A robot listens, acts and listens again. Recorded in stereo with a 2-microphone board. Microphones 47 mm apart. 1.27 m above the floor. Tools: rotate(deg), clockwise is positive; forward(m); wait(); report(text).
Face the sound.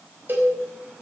rotate(45)
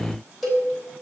report("Facing the cowbell.")